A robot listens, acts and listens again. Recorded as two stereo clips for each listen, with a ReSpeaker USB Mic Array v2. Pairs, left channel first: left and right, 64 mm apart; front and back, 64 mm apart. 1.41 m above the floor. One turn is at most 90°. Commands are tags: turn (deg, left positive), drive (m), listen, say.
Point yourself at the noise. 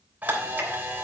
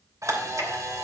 <turn deg="-90"/>
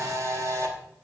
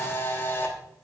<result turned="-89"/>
<turn deg="-60"/>
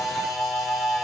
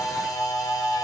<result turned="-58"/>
<say>Found it: a camera shutter, straight ahead.</say>